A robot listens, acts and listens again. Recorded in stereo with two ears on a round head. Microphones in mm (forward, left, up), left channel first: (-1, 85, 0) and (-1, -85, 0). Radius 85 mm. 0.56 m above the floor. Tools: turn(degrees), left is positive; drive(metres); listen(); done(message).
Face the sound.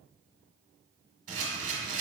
turn(degrees=-40)
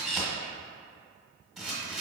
done("Facing the camera shutter, 1 to 2 m away.")